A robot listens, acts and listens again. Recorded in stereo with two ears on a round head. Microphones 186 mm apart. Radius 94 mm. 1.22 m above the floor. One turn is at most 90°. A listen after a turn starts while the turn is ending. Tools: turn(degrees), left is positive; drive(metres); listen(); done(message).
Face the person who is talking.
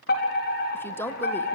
turn(degrees=30)
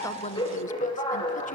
listen()
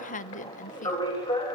turn(degrees=90)
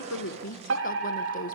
turn(degrees=45)
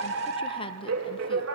turn(degrees=25)
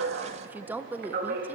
turn(degrees=-10)
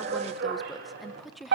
done("Facing the woman speaking, 1 to 2 m away.")